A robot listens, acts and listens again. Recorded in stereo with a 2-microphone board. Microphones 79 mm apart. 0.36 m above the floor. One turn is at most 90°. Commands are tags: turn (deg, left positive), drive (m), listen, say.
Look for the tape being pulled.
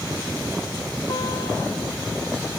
<listen/>
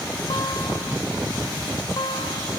<listen/>
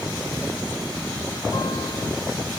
<say>I can't make out tape being pulled, only a guitar.</say>